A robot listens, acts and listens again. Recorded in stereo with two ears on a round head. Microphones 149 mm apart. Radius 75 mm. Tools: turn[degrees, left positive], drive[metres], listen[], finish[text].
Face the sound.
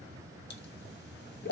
Thought: The pop: about 65° left or 115° left.
Action: turn[65]
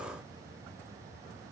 Action: listen[]
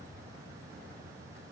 Action: finish[I heard a pop, but can't make it out now. It was about straight ahead or 50° left.]